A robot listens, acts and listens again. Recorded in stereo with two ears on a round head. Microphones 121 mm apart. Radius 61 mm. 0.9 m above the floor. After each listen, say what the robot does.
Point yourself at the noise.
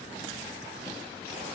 Keep listening.
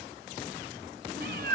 Turn 90° right.
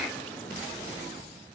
Keep listening.
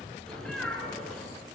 Found it: a cat meowing, straight ahead.